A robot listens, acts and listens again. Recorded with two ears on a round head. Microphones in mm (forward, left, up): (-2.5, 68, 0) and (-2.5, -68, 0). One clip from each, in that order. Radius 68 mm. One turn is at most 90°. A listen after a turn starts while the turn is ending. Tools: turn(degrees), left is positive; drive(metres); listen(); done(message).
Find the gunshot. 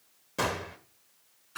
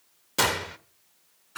turn(degrees=-60)
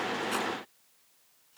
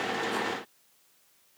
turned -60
listen()
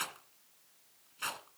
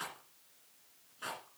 done("I heard a gunshot, but can't make it out now. It was about straight ahead or 60° right.")